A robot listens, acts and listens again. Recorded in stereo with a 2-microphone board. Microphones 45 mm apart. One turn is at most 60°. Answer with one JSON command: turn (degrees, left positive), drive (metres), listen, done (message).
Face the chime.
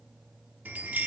{"turn": -40}
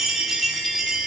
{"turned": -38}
{"done": "Facing the chime."}